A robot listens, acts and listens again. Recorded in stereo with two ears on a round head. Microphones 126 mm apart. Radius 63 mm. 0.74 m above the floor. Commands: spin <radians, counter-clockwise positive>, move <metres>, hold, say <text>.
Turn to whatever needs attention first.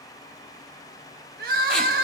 spin -1.22
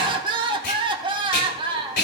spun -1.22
spin -0.61
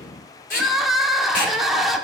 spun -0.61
say Facing the crying, under 1 m away.